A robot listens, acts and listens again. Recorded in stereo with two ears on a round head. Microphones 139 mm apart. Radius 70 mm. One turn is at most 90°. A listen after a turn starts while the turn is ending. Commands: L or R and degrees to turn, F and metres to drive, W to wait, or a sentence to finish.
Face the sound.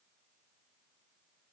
W
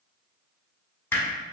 L30
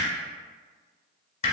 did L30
L90
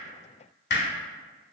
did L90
L75
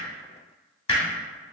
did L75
L35
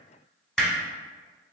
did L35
Facing the hammering.